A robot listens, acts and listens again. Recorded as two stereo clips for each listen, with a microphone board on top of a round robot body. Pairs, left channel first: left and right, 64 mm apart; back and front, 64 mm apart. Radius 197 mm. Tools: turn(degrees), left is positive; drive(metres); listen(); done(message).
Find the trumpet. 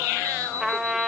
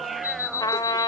turn(degrees=180)
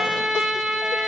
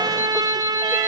done("Facing the trumpet.")